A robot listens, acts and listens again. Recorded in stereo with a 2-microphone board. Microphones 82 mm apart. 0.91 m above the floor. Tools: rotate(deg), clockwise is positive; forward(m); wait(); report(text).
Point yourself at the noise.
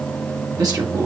rotate(60)
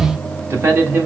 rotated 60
rotate(30)
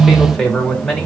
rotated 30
report("Found it: a man speaking, straight ahead, 2 to 4 m away.")